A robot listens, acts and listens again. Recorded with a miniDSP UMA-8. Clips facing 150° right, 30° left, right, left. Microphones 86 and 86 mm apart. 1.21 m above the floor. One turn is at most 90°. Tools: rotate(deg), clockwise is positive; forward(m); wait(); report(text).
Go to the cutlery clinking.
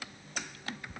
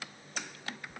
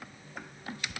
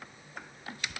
wait()
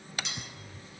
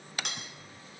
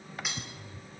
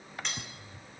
forward(1.0)
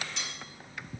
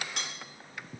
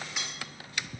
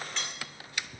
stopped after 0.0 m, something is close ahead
rotate(10)
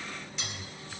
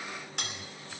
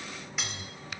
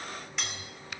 report("Blocked. The cutlery clinking is further on, straight ahead.")